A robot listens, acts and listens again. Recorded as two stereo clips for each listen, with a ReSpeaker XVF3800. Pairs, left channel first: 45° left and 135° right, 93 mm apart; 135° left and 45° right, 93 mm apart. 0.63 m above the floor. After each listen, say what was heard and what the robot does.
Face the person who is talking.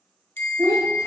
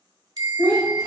The child speaking: 175° right. Turn 175° right.
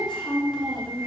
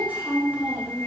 The child speaking is now 25° left. Turn 25° left.
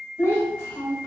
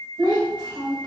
The child speaking is now 15° right. Turn 15° right.
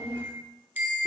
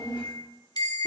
Facing the child speaking.